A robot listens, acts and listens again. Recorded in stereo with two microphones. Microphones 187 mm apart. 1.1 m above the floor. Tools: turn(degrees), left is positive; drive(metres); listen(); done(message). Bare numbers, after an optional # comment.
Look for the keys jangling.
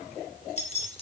# The keys jangling: about 35° left or 145° left.
turn(35)
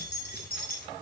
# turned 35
# So it is at 125° left.
turn(125)
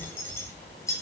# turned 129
# The keys jangling is now 15° left.
turn(15)
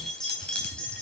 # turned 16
done("Found it: keys jangling, straight ahead.")